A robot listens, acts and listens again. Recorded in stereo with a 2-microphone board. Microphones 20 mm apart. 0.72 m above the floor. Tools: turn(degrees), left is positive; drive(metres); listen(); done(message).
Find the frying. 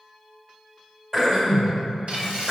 turn(degrees=-70)
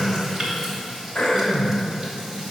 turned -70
turn(degrees=-35)
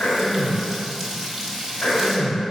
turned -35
turn(degrees=-15)
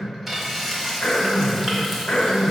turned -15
done("Facing the frying.")